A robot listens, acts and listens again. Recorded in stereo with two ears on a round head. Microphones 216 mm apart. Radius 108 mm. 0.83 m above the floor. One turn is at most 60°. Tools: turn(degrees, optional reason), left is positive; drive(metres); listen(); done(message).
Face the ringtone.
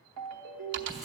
turn(degrees=-60)
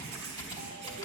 turn(degrees=-30, reason="Nothing new. It was at 30° right.")
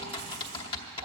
listen()
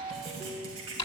turn(degrees=-20, reason="The ringtone is now 20° right.")
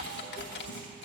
listen()
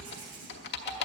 listen()
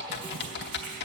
done("Facing where the ringtone came from. I can't hear it now.")